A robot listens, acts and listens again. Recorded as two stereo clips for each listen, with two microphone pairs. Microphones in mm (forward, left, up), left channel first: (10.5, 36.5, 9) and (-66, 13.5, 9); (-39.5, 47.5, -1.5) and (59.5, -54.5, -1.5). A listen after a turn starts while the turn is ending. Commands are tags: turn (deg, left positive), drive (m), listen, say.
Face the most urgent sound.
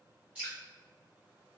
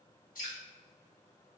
<listen/>
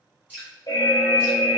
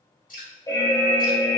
<turn deg="70"/>
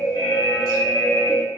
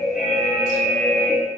<turn deg="10"/>
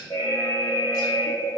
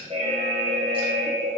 <say>Facing the alarm, under 1 m away.</say>